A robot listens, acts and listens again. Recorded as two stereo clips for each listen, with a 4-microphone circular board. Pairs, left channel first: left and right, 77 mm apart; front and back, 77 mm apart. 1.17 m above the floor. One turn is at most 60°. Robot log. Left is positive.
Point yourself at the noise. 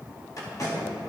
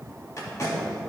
note: The tape being pulled: 50° left.
cmd yaw +50
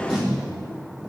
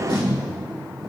end: Found it: tape being pulled, straight ahead, 2 to 4 m away.